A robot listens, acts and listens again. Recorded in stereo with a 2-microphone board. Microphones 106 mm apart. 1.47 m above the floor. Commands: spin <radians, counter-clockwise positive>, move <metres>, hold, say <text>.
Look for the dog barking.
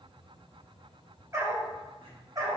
spin -0.61
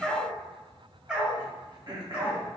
spin -0.17
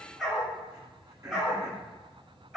say Facing the dog barking.